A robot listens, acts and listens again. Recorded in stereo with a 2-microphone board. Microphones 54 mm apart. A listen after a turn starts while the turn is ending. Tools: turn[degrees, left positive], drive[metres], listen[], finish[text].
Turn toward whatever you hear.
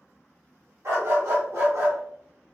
Thought: The dog barking: about 65° right or 115° right.
Action: turn[-65]
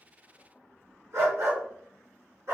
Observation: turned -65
Thought: So it is at 60° right.
Action: turn[-60]
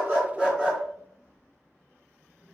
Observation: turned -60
Action: finish[Found it: a dog barking, straight ahead, over 4 m away.]